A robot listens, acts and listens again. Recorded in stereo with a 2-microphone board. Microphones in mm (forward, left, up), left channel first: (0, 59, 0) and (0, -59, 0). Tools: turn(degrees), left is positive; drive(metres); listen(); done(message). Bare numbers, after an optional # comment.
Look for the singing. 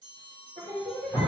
# The singing: about 60° right or 120° right.
turn(-60)
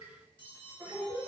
# So it is at 20° right.
turn(-20)
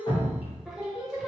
done("Found it: singing, straight ahead, 1 to 2 m away.")